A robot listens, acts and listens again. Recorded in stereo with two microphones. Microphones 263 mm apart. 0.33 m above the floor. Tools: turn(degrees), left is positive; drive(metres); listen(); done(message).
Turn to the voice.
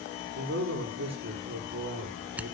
turn(degrees=-70)
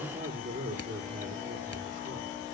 turn(degrees=-40)
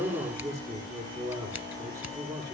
turn(degrees=-25)
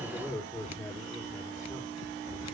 done("Found it: a man speaking, straight ahead, over 4 m away.")